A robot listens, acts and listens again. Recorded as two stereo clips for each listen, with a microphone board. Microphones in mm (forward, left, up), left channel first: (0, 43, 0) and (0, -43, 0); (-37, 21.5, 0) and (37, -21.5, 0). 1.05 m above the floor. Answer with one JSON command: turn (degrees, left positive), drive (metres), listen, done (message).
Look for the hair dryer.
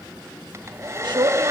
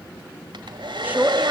{"turn": -40}
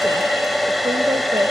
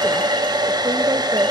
{"done": "Facing the hair dryer."}